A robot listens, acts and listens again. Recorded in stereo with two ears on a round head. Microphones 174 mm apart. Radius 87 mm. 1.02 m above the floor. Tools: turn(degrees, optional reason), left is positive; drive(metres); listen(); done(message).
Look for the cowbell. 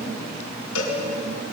turn(degrees=90)
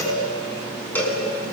turn(degrees=10, reason="So it is at 10° left.")
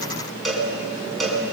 done("Found it: a cowbell, straight ahead.")